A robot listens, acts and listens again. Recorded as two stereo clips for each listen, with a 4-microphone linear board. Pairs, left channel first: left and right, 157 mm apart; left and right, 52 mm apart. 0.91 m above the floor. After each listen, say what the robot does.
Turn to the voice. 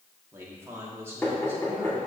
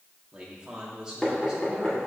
Turn 20° right.
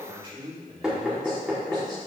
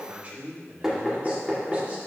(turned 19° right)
Turn 35° right.
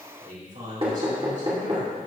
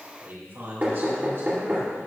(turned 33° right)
Turn 120° right.
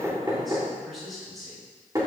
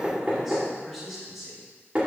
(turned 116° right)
Facing the man speaking, over 4 m away.